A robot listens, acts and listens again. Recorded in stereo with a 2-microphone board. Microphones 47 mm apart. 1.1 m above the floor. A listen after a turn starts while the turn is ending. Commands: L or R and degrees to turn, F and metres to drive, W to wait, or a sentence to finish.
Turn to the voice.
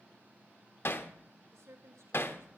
R90
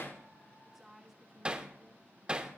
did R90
Facing the woman speaking, 1 to 2 m away.